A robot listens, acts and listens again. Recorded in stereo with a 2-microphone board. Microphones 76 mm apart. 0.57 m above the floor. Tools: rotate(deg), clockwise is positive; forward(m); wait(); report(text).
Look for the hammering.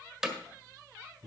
rotate(30)
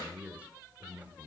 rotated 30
wait()
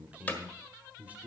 rotate(-25)
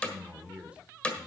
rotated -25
rotate(-20)
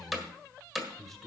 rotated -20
report("Facing the hammering, 1 to 2 m away.")